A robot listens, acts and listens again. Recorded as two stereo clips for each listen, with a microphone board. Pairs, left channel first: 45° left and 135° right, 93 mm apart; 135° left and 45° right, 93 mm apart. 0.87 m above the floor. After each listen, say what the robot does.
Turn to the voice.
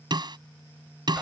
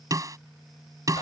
Keep listening.
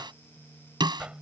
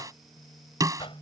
Keep listening.
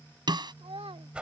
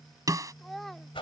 Turn 135° right.
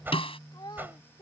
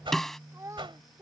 Turn 10° left.
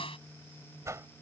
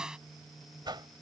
Keep listening.
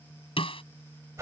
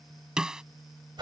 Keep listening.
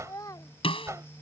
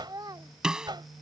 Facing the child speaking.